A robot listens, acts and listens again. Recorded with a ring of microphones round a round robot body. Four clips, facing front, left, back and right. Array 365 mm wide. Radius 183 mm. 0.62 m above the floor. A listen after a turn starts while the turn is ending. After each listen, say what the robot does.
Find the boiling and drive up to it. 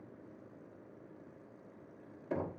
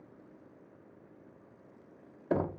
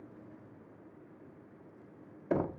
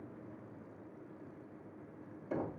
Keep listening.
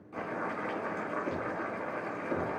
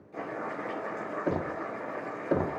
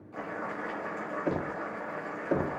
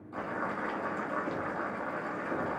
Turn 60° right.
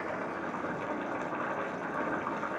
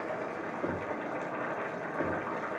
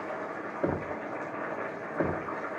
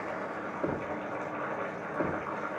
Drive 1.0 m forward.
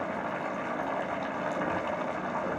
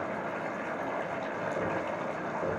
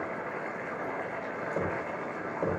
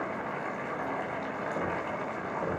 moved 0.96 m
Drive 1.0 m forward.
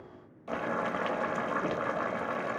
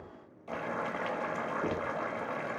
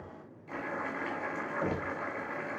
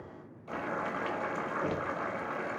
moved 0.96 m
Drive 1.0 m forward.
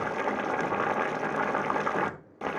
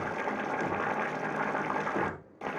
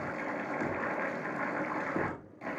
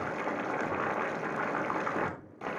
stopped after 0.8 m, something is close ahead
Arrived at the boiling, straight ahead.